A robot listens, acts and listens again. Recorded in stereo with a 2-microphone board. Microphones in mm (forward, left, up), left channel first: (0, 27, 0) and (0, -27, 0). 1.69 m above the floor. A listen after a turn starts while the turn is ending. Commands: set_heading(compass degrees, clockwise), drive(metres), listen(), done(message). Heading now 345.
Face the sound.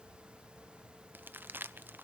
set_heading(25)
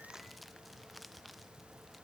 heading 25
done("Facing the crumpling, under 1 m away.")